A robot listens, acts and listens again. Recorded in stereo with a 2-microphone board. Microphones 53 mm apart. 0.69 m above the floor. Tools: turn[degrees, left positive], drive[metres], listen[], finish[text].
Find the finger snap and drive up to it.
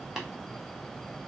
Action: listen[]
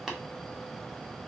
Action: listen[]
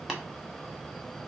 Action: finish[I can't make out a finger snap to turn to.]